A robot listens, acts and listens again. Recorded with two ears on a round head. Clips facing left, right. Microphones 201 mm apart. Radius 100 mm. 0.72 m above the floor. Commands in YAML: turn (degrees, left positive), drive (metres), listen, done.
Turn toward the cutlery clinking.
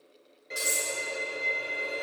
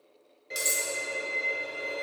turn: -45
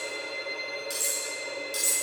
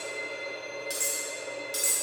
done: "Found it: cutlery clinking, straight ahead."